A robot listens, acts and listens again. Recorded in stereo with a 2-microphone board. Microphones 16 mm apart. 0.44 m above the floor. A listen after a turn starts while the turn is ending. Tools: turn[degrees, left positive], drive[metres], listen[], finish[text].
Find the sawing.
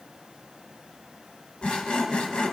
Action: turn[90]
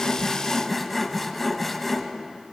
Thought: So it is at 10° left.
Action: turn[10]
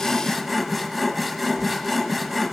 Action: finish[Found it: sawing, straight ahead, 1 to 2 m away.]